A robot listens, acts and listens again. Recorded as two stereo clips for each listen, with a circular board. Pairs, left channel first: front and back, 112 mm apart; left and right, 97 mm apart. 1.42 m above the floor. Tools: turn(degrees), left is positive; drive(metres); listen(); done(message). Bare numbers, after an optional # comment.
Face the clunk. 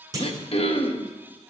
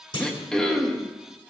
# The clunk: 125° left.
turn(125)
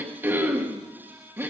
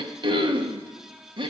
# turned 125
done("I heard a clunk from this way, but can't make it out now.")